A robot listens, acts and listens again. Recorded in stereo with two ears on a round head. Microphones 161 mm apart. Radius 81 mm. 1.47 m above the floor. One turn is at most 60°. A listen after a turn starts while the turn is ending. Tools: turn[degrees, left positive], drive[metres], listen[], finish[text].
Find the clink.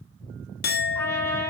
Thought: The clink: about 55° left or 125° left.
Action: turn[55]
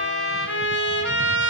Action: listen[]
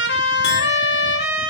Action: listen[]
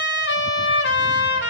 Action: finish[I heard a clink, but can't make it out now. It was about straight ahead or 70° left.]